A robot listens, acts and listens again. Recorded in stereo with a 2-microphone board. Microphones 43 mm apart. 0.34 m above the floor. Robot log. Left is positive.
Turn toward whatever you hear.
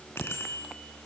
note: The bicycle bell: about 75° left or 105° left.
cmd yaw +75
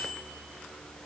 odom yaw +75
note: So it is at 15° left.
cmd yaw +15
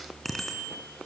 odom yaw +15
end: Found it: a bicycle bell, straight ahead, 2 to 4 m away.